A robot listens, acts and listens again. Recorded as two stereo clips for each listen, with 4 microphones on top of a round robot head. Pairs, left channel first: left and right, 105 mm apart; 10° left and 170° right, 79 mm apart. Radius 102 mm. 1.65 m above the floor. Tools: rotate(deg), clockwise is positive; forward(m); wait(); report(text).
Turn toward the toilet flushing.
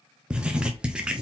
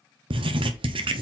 wait()
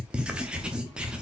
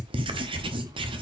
wait()
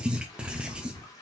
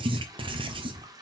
rotate(-150)
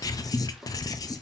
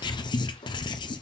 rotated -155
report("Facing the toilet flushing, 1 to 2 m away.")